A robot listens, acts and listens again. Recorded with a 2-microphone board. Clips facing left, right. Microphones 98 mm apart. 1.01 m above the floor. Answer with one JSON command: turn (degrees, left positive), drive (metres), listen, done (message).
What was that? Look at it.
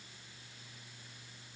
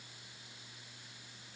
{"listen": true}
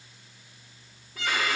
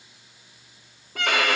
{"turn": -65}
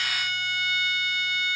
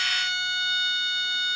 {"turn": -25}
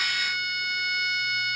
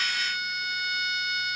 {"done": "Facing the violin."}